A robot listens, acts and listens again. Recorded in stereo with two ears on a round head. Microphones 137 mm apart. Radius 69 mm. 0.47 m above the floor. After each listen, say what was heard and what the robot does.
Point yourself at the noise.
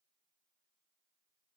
Keep listening.
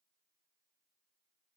Keep listening.
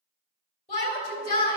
The shout: about 50° left or 130° left. Turn 50° left.
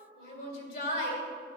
So it is at 65° left. Turn 65° left.
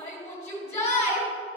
The shout is now 25° left. Turn 25° left.
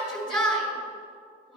Found it: a shout, straight ahead, 2 to 4 m away.